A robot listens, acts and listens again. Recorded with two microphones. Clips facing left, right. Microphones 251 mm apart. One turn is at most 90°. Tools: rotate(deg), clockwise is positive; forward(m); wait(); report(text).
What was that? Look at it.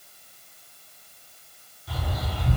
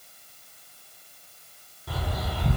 rotate(60)
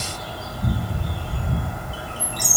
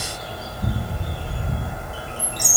rotate(25)
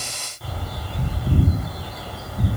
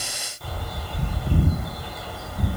report("Found it: a bird, straight ahead, under 1 m away.")